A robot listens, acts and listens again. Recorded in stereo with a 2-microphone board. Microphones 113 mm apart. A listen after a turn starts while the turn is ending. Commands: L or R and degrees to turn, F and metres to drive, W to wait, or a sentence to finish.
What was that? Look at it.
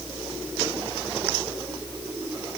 W
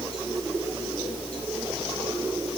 W
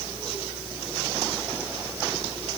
I can't make out anything.